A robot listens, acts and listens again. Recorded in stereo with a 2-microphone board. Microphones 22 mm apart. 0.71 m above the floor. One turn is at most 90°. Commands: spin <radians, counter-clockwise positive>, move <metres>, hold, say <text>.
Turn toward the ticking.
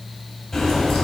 spin 0.35
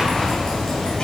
spin 1.57
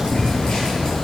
spin 0.96
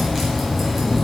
say Found it: ticking, straight ahead, 2 to 4 m away.